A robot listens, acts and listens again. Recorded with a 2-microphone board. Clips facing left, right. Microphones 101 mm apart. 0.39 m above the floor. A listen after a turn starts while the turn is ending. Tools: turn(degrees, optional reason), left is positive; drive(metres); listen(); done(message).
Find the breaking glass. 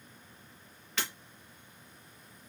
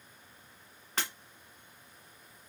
turn(degrees=-45, reason="The breaking glass: about 45° right or 135° right.")
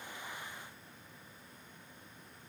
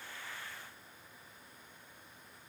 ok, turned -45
listen()
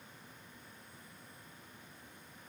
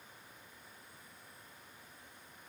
done("I heard breaking glass, but can't make it out now. It was about straight ahead or 90° right.")